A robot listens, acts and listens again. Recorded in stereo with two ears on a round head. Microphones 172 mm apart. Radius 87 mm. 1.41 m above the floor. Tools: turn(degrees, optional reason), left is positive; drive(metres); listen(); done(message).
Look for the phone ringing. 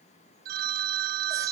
turn(degrees=-50, reason="The phone ringing: about 50° right or 130° right.")
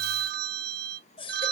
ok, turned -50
turn(degrees=-65, reason="So it is at 65° right.")
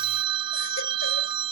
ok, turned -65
turn(degrees=-30, reason="The phone ringing is now 30° right.")
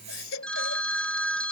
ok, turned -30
done("Facing the phone ringing.")